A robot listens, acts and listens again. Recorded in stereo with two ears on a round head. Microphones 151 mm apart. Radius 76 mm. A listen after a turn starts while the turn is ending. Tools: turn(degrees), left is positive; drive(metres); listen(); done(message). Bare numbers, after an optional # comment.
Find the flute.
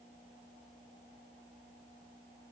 listen()
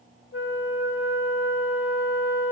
# The flute: about 75° left or 105° left.
turn(75)
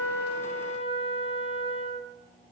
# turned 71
# So it is at 30° left.
turn(30)
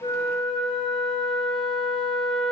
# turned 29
done("Facing the flute.")